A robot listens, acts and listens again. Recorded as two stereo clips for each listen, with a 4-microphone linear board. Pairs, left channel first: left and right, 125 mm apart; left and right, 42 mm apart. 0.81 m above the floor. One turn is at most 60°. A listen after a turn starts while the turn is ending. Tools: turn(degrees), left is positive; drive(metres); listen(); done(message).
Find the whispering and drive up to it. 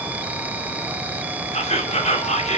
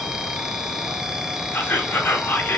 turn(degrees=60)
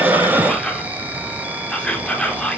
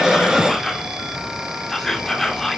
turn(degrees=10)
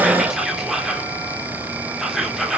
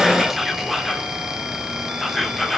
drive(metres=1.0)
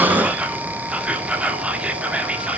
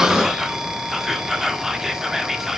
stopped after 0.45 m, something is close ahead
turn(degrees=-10)
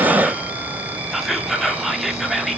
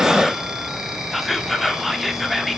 done("Blocked. The whispering is further on, straight ahead.")